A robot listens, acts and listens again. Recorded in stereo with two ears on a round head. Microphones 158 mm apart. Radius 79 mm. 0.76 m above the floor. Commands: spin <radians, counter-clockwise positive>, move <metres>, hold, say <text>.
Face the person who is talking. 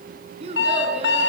spin -0.61
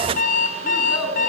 say Facing the child speaking.